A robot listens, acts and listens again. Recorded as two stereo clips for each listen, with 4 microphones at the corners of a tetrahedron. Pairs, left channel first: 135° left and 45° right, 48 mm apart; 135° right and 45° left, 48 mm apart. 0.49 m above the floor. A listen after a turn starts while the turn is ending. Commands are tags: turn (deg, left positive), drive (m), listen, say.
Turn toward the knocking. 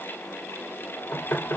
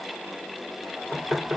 <turn deg="110"/>
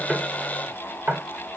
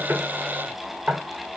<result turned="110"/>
<turn deg="-15"/>
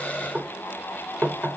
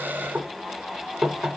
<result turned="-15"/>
<say>Facing the knocking.</say>